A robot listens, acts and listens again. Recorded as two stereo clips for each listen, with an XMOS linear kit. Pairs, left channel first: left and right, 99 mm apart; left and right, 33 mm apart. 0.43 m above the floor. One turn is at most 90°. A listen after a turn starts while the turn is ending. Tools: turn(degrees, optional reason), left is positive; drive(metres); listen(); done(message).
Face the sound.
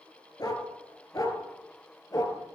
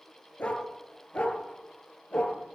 turn(degrees=35, reason="The dog barking: about 35° left or 145° left.")
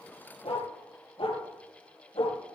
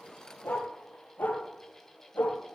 turn(degrees=90, reason="So it is at 110° left.")
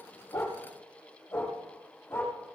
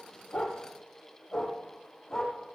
turn(degrees=25, reason="The dog barking is now 25° left.")
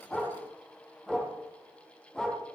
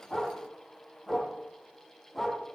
done("Facing the dog barking, over 4 m away.")